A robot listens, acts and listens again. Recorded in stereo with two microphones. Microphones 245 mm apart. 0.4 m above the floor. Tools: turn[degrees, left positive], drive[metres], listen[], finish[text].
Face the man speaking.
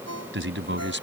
Thought: The man speaking: about 50° right or 130° right.
Action: turn[-50]
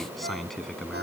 Action: finish[Found it: a man speaking, straight ahead.]